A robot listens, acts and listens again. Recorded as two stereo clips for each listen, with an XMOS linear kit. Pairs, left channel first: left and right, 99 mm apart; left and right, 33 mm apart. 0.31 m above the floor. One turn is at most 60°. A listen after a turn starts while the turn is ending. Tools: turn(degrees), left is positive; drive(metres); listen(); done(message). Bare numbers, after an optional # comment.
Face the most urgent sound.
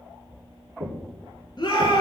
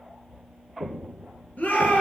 # The shout: about 45° left or 135° left.
turn(45)
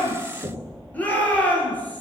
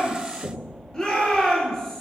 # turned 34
# So it is at 15° left.
turn(15)
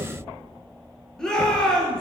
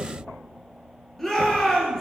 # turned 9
done("Facing the shout.")